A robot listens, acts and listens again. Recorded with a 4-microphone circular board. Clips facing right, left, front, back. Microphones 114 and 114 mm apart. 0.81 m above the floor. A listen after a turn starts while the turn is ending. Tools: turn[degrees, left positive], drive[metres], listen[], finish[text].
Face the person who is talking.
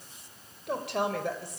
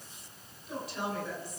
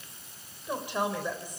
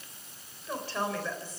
Thought: The woman speaking: 75° right.
Action: turn[-75]
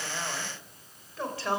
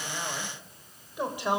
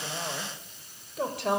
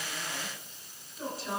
Thought: The woman speaking is now 15° left.
Action: turn[15]
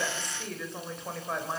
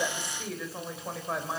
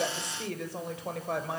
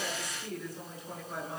Action: finish[Facing the woman speaking, 2 to 4 m away.]